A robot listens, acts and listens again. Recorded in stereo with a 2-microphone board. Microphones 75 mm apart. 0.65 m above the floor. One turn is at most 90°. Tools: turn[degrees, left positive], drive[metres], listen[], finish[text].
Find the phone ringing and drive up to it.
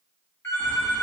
Thought: The phone ringing: about 35° left or 145° left.
Action: turn[35]
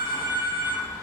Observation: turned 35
Thought: So it is at 110° left.
Action: turn[90]
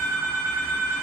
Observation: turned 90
Thought: The phone ringing is now 55° left.
Action: turn[55]
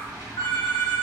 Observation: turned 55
Thought: The phone ringing is now 30° left.
Action: turn[30]
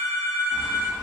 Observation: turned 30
Action: drive[1.0]
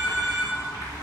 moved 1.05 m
Action: drive[1.0]
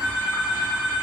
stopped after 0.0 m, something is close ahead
Thought: The phone ringing is now 10° right.
Action: turn[-10]
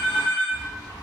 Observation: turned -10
Action: finish[Arrived at the phone ringing, straight ahead.]